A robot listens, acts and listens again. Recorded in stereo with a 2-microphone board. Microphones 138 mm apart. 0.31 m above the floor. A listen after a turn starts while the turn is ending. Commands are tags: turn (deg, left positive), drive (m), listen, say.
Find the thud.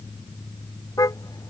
<listen/>
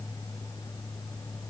<listen/>
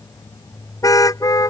<say>I can't make out a thud, only a car horn.</say>